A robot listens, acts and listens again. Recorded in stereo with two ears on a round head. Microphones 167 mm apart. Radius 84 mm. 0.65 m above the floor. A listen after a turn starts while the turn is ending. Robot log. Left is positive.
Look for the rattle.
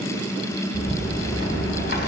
note: The rattle: about 60° left or 120° left.
cmd yaw +60
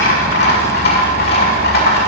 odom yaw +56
note: So it is at 60° left.
cmd yaw +60
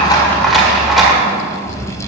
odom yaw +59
end: Found it: a rattle, straight ahead, 1 to 2 m away.